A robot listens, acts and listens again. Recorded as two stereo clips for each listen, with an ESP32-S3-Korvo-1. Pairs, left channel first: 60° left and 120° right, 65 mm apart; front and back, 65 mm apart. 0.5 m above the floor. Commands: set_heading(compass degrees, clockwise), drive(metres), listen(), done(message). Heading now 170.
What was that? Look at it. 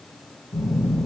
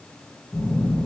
set_heading(120)
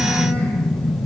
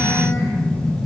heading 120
done("Found it: a phone buzzing, straight ahead.")